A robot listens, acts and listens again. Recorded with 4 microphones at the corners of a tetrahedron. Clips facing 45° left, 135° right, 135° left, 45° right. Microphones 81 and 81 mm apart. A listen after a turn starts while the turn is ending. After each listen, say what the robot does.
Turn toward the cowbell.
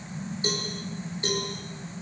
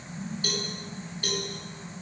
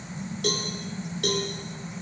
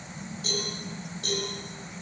Turn 110° left.
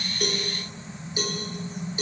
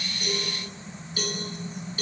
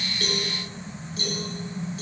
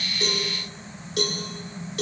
Turn 25° right.
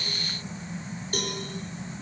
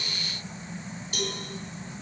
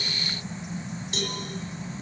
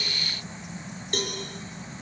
Found it: a cowbell, straight ahead, over 4 m away.